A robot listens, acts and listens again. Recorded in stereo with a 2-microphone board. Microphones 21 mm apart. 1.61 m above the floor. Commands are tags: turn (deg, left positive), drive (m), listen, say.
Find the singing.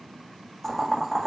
<listen/>
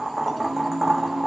<turn deg="-40"/>
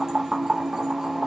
<turn deg="-20"/>
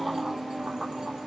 <turn deg="20"/>
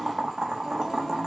<listen/>
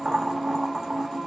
<turn deg="10"/>
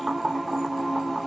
<say>Found it: singing, straight ahead.</say>